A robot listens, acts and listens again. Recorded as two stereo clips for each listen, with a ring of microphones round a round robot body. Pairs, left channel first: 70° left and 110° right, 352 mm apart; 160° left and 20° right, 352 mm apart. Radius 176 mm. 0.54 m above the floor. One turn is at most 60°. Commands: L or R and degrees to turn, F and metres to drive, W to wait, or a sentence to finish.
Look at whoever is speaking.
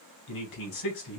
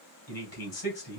L60
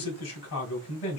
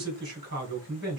L35
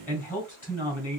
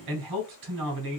Facing the man speaking.